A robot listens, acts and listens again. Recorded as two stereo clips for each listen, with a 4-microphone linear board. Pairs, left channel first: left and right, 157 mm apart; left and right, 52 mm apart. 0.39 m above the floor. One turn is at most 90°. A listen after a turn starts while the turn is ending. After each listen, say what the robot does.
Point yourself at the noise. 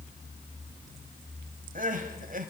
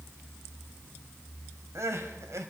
Turn 60° right.
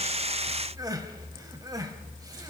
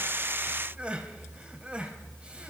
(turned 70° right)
Turn 25° right.
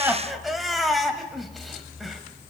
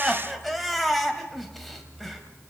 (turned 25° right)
Facing the crying, 1 to 2 m away.